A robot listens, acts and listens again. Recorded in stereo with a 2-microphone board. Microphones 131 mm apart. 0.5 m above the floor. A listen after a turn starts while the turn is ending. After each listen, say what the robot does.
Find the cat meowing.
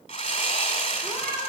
Turn 25° right.
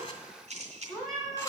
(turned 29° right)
Facing the cat meowing, 2 to 4 m away.